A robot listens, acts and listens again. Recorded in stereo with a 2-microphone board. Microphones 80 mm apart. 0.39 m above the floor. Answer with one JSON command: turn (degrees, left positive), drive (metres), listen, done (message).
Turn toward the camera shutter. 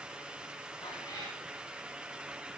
{"listen": true}
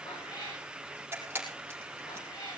{"turn": -30}
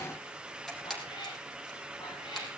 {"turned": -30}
{"done": "Facing the camera shutter, over 4 m away."}